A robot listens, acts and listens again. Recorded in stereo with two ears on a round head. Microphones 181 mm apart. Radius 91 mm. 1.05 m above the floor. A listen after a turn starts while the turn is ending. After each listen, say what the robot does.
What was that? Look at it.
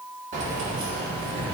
Turn 45° right.
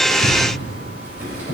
Turn 10° right.
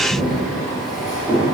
Found it: keys jangling, straight ahead.